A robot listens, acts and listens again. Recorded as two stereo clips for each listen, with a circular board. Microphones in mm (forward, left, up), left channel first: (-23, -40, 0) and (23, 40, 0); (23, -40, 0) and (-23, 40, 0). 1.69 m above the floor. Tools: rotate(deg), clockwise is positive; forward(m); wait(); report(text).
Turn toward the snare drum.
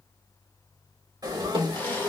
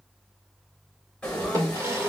rotate(-70)
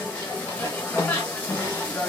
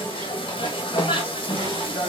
wait()
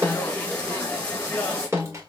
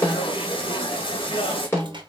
report("Found it: a snare drum, straight ahead.")